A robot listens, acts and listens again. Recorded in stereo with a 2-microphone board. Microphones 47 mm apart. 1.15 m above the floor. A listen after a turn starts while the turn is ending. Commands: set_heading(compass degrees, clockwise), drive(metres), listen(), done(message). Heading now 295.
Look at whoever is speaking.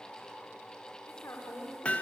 set_heading(225)
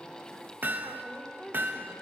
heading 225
done("Found it: a woman speaking, straight ahead, over 4 m away.")